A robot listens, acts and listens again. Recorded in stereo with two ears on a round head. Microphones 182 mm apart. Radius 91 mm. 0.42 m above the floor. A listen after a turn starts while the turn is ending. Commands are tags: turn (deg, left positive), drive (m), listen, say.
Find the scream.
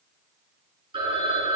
<listen/>
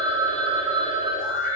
<turn deg="45"/>
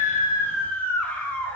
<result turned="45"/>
<turn deg="10"/>
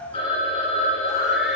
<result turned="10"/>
<listen/>
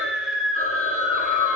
<say>Facing the scream, 1 to 2 m away.</say>